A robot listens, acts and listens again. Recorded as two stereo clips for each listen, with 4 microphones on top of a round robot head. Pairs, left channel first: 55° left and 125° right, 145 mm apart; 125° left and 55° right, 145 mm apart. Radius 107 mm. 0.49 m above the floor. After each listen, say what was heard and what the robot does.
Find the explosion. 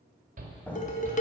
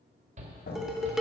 The explosion: 140° left. Turn 140° left.
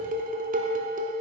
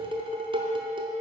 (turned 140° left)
I heard an explosion from this way, but can't make it out now.